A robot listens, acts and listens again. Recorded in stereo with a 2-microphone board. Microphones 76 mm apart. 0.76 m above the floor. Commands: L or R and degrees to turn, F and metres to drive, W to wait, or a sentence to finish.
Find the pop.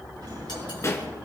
L40
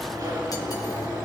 W
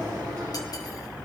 I heard a pop, but can't make it out now. It was about straight ahead or 100° left.